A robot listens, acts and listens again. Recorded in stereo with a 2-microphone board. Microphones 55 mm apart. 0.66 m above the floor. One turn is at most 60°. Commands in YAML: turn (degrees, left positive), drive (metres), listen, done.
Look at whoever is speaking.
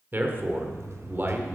turn: -40
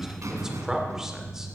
turn: -10
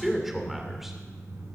done: "Found it: a man speaking, straight ahead, 2 to 4 m away."